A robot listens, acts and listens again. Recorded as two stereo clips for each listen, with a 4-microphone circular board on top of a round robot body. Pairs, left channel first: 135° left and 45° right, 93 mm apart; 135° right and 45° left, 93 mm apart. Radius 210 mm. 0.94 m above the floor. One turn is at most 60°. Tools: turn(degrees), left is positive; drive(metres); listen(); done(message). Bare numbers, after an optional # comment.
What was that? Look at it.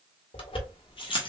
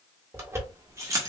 # The keys jangling: 105° left.
turn(60)
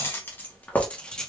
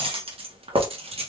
# The keys jangling is now 50° left.
turn(50)
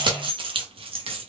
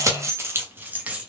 # The keys jangling is now 30° right.
turn(-30)
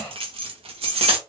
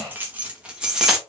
# The keys jangling is now 40° right.
turn(-40)
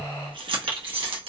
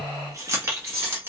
# The keys jangling is now 20° right.
turn(-20)
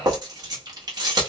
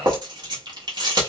done("Found it: keys jangling, straight ahead, 1 to 2 m away.")